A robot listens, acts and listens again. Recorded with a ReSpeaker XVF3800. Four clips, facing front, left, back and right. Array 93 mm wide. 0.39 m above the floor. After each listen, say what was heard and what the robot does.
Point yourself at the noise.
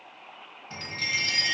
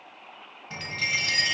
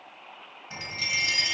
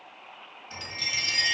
The chime: 100° left. Turn 100° left.
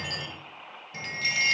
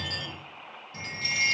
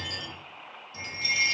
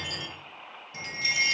The chime is now 10° right. Turn 10° right.
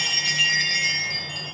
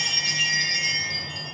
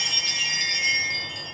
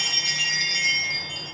Found it: a chime, straight ahead, 1 to 2 m away.